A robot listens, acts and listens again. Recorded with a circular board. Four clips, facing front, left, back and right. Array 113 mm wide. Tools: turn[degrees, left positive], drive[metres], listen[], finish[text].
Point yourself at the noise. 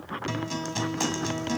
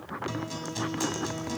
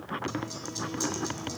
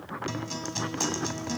Thought: The guitar: 10° right.
Action: turn[-10]
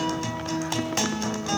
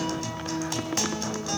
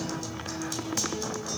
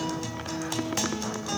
Action: finish[Facing the guitar.]